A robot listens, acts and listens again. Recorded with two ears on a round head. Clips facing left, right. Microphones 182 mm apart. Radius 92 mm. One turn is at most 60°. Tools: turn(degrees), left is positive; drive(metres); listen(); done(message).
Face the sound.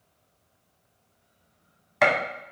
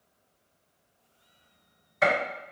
turn(degrees=60)
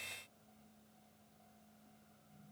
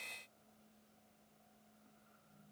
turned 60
listen()
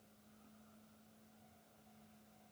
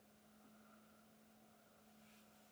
done("I heard a gunshot, but can't make it out now. It was about 10° left or 50° left.")